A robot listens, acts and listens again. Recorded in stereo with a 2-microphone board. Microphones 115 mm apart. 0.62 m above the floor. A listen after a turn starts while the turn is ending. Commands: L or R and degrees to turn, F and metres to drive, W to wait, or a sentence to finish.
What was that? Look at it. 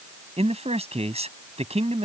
R65
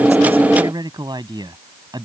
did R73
R40
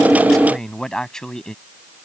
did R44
Facing the man speaking.